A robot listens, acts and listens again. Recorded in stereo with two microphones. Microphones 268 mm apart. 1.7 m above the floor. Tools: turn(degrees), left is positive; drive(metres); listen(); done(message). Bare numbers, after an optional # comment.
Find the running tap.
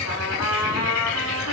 listen()
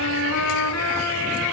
listen()
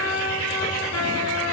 done("I can't make out a running tap, only a trumpet.")